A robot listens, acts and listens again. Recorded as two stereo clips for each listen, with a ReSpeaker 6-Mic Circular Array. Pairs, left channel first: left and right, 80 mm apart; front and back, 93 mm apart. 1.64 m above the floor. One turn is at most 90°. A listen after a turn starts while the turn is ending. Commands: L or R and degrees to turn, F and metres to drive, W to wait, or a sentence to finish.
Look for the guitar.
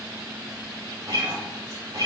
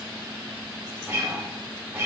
R90
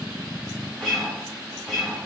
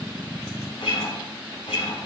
Found it: a guitar, straight ahead, 2 to 4 m away.